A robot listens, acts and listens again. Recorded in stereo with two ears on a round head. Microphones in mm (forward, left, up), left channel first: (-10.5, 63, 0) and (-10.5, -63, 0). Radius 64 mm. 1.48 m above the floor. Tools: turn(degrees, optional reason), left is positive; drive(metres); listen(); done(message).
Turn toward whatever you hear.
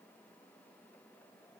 listen()
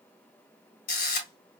turn(degrees=70, reason="The camera shutter: about 70° left or 110° left.")
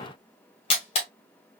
turn(degrees=40, reason="So it is at 40° left.")
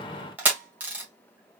turn(degrees=-10, reason="The camera shutter is now 10° right.")
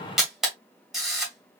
done("Facing the camera shutter.")